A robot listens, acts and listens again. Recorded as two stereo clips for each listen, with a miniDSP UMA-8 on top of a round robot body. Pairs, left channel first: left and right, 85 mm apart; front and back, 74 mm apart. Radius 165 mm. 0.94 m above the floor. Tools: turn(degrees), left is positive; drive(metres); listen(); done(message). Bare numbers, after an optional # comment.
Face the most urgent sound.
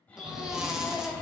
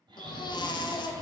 done("Found it: a baby crying, straight ahead.")